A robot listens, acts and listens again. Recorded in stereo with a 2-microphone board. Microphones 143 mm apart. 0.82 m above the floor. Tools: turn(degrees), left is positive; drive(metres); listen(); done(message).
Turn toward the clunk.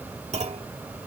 turn(degrees=-50)
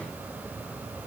listen()
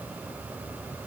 done("I heard a clunk, but can't make it out now. It was about straight ahead or 80° right.")